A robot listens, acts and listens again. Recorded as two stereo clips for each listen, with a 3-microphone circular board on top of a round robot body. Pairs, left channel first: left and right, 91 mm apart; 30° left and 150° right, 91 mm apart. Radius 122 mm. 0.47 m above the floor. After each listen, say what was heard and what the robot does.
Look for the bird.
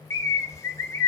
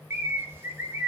The bird: 150° left. Turn 150° left.
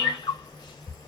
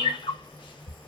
The bird is now 55° left. Turn 55° left.
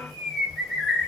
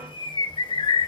Facing the bird.